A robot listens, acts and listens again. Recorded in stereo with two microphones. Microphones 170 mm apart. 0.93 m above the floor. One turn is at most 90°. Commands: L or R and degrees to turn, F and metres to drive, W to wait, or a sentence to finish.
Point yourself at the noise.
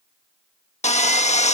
L40
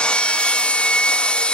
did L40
Facing the sawing.